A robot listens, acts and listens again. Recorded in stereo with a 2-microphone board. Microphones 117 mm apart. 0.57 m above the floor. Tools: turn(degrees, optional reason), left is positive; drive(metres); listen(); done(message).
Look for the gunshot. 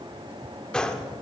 turn(degrees=30)
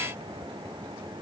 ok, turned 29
listen()
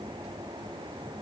done("I heard a gunshot, but can't make it out now. It was about 25° right or 145° left.")